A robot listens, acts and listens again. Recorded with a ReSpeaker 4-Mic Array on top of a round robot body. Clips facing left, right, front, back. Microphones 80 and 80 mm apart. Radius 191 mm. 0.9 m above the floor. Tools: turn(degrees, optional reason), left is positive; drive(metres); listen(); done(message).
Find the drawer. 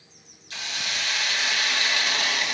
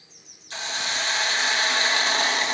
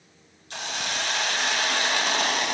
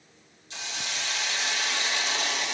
listen()
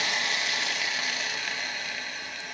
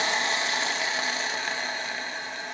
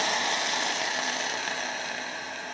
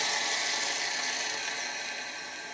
listen()
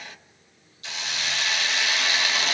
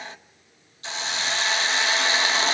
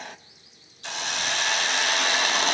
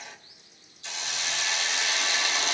done("I can't make out a drawer to turn to.")